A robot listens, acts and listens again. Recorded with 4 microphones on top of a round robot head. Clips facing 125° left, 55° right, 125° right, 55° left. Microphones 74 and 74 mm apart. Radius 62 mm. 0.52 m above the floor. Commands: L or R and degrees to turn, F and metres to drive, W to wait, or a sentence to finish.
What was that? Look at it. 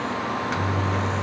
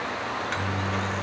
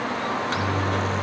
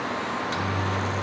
R150
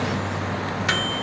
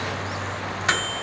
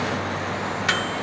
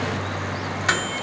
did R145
Found it: a microwave, straight ahead, under 1 m away.